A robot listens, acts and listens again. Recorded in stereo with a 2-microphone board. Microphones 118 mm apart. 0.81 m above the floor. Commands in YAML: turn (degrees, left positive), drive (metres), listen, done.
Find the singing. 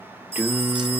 turn: -30
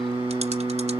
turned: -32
turn: -135
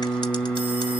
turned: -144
turn: 10
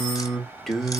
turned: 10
done: "Facing the singing."